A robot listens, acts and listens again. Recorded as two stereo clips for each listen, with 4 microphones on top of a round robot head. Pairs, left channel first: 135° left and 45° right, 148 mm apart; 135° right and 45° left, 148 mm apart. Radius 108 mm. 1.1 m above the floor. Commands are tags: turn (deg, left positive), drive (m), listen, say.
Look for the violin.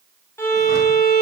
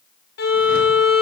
<turn deg="-150"/>
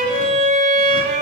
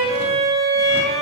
<say>Facing the violin, 2 to 4 m away.</say>